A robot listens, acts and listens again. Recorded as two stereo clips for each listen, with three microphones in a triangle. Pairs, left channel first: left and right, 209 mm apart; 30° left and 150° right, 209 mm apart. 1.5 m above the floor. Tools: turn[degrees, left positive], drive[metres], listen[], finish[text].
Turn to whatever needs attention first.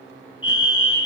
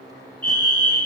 Thought: The fire alarm: 75° left.
Action: turn[75]
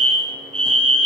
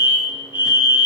Action: finish[Found it: a fire alarm, straight ahead.]